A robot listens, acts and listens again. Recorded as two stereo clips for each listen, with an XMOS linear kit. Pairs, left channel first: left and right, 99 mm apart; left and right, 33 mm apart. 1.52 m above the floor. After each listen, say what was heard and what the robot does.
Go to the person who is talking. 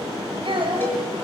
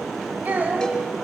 The child speaking: about 70° right or 110° right. Turn 70° right.
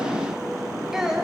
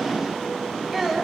Drive 1.0 m forward.
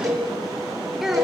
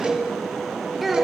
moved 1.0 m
Drive 1.0 m forward.
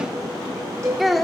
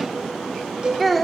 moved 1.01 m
Drive 1.0 m forward.
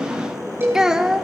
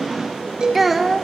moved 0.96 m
Drive 1.0 m forward.
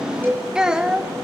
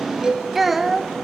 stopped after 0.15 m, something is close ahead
The child speaking is now 10° right. Turn 10° right.
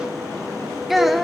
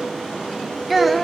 Arrived at the child speaking, straight ahead.